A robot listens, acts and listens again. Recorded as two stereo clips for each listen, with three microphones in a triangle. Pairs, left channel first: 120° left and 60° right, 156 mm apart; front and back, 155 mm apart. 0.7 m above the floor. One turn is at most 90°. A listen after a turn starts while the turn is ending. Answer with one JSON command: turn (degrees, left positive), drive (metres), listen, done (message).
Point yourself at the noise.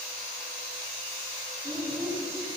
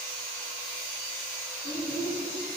{"done": "Found it: a child speaking, straight ahead."}